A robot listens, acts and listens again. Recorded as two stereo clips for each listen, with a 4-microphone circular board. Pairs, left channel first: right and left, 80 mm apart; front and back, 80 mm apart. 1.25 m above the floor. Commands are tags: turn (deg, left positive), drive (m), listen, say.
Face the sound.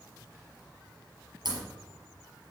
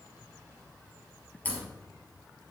<turn deg="70"/>
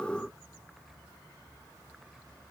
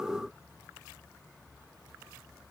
<say>I heard a crack from this way, but can't make it out now.</say>